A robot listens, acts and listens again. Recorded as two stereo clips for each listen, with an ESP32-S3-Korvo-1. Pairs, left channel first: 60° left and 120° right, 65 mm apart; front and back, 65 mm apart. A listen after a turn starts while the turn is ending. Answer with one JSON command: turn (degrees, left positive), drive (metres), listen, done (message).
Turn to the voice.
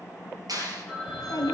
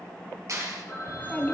{"turn": 65}
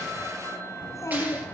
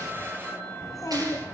{"turn": 20}
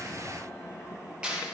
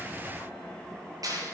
{"listen": true}
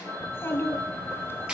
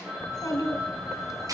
{"turn": 10}
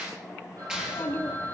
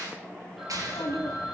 {"done": "Found it: a child speaking, straight ahead, 2 to 4 m away."}